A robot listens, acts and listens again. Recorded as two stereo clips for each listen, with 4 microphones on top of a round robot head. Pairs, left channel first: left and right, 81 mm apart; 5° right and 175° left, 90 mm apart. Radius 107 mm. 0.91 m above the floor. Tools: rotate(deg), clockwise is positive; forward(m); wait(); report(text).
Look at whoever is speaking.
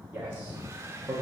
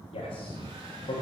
rotate(15)
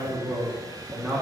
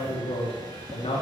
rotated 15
report("Found it: a man speaking, straight ahead, 1 to 2 m away.")